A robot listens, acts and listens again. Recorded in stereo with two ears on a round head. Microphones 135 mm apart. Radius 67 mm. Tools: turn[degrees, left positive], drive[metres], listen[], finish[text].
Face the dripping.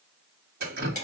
Thought: The dripping: about 65° right or 115° right.
Action: turn[-65]
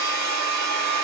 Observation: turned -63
Action: listen[]
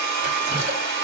Action: listen[]
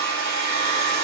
Action: finish[I heard dripping, but can't make it out now. It was about straight ahead or 50° right.]